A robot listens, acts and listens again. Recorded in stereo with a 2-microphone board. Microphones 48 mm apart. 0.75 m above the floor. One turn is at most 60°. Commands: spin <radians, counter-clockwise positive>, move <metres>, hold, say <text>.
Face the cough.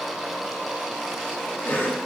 spin 0.70
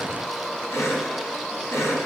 spin 1.05
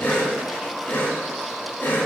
spin 0.70
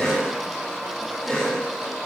spin 0.17
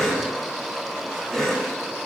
say Facing the cough.